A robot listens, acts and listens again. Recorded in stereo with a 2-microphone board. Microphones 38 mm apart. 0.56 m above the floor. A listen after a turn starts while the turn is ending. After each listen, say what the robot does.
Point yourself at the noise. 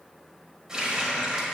Turn 20° right.
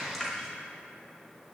Facing the running tap.